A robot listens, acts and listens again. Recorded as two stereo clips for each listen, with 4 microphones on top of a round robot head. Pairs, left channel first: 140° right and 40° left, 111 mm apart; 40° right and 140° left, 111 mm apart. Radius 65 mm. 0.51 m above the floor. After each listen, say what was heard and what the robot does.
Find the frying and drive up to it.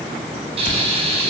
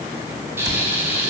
The frying: 70° left. Turn 70° left.
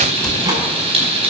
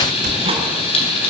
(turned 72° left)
Drive 1.0 m forward.
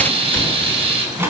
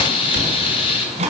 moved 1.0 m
Drive 1.0 m forward.
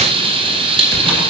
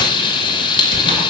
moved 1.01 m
Drive 1.0 m forward.
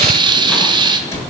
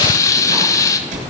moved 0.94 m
The frying is now 10° left. Turn 10° left.
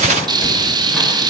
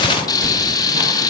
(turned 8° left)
Drive 1.0 m forward.
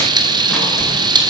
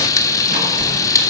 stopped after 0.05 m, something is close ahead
The frying is now 10° left. Turn 10° left.
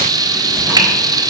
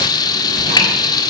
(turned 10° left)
Arrived at the frying, straight ahead.